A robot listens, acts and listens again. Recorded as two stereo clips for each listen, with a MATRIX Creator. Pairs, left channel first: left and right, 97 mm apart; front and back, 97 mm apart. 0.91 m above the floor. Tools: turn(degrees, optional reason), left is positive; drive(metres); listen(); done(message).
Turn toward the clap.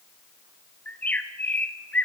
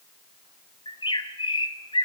listen()
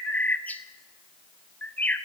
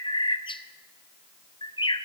listen()
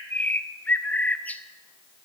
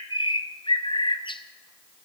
done("I can't make out a clap to turn to.")